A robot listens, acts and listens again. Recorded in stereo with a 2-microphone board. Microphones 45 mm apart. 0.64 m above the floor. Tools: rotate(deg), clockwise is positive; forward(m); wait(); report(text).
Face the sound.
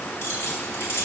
rotate(-70)
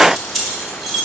report("Facing the keys jangling, 1 to 2 m away.")